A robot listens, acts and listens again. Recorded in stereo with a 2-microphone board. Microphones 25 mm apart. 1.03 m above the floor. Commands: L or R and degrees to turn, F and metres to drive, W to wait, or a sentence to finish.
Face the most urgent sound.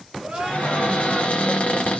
R45
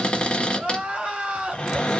R80
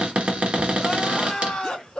L35
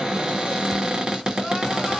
W
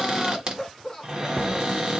L10
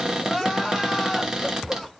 Found it: crying, straight ahead.